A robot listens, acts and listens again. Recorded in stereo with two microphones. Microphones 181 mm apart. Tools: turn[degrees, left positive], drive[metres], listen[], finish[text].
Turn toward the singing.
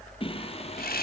Thought: The singing: about 35° left or 145° left.
Action: turn[35]
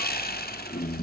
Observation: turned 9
Thought: The singing: about 50° left or 130° left.
Action: turn[50]
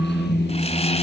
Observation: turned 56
Thought: So it is at 70° left.
Action: turn[70]
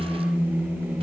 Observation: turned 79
Thought: The singing is now 10° right.
Action: turn[-10]
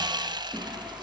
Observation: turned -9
Action: listen[]
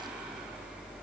Action: listen[]
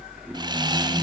Action: finish[Facing the singing.]